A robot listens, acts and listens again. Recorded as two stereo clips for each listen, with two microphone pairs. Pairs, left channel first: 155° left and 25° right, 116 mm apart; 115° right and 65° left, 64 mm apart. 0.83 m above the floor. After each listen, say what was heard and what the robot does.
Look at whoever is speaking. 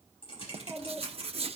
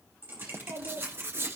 The child speaking: 65° left. Turn 65° left.
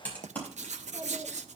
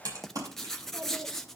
The child speaking is now 20° left. Turn 20° left.
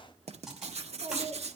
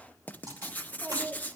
Found it: a child speaking, straight ahead, 2 to 4 m away.